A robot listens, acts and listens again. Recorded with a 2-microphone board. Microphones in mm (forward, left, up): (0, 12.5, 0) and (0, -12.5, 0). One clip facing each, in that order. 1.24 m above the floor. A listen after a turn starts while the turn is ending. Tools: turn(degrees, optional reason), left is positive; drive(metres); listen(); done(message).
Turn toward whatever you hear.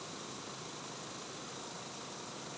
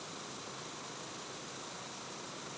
listen()
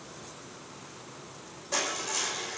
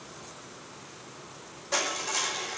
turn(degrees=-30)
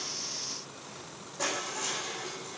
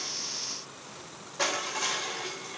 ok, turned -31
turn(degrees=-135, reason="So it is at 135° right.")
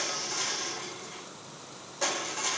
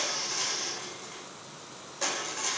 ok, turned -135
done("Facing the crushing, over 4 m away.")